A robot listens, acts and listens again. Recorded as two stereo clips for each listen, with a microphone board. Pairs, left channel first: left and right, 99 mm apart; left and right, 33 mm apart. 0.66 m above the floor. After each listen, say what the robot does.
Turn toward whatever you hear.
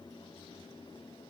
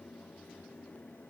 Keep listening.
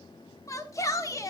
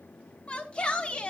Turn 35° left.
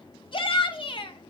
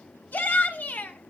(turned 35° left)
Turn 110° left.
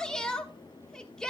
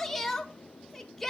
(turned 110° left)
Turn 10° left.
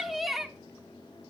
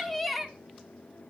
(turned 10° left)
Found it: a shout, straight ahead, 1 to 2 m away.